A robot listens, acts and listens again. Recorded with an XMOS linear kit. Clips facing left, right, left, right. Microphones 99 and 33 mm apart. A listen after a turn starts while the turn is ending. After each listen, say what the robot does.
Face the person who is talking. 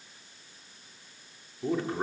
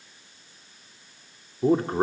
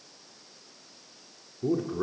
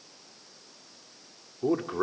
Turn 40° right.
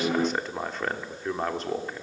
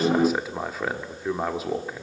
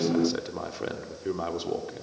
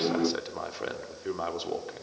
Found it: a man speaking, straight ahead, 1 to 2 m away.